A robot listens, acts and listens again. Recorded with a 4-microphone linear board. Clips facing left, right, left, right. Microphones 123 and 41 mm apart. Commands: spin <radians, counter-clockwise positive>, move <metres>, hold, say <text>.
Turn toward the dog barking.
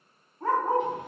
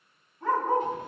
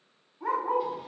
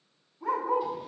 spin 0.70
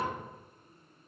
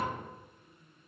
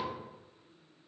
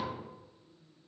hold
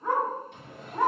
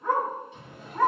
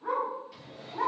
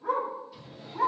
spin 0.26
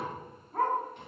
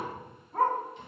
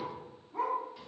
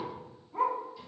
say Facing the dog barking.